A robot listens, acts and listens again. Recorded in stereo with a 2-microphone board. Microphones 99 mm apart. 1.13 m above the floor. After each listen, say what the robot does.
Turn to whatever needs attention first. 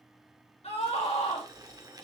Turn 90° left.
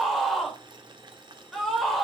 Found it: a scream, straight ahead.